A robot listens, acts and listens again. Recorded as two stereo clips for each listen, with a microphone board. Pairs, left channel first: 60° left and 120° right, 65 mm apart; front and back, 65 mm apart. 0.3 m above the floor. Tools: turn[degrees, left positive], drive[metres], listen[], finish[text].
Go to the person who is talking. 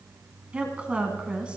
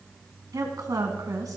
Thought: The woman speaking: 170° left.
Action: turn[170]
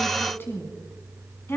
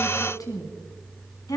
Thought: The woman speaking is now 10° left.
Action: turn[10]
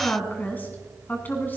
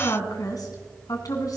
Action: drive[1.0]
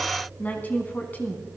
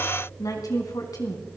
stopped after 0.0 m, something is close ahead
Action: finish[Blocked. The woman speaking is further on, straight ahead.]